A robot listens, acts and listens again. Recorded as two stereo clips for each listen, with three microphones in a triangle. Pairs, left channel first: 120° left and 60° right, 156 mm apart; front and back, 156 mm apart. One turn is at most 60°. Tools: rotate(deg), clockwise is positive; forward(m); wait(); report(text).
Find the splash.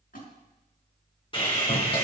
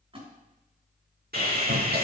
rotate(-60)
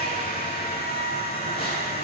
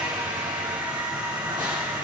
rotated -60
rotate(-60)
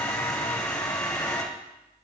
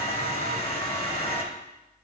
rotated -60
rotate(-10)
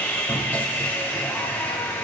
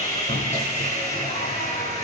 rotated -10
report("I heard a splash from this way, but can't make it out now.")